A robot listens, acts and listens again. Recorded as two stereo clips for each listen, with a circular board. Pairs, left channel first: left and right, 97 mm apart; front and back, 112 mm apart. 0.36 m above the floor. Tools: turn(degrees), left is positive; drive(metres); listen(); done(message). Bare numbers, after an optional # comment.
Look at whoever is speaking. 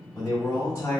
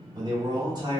# The man speaking: 140° left.
turn(140)
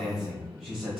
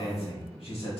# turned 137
done("Facing the man speaking, 1 to 2 m away.")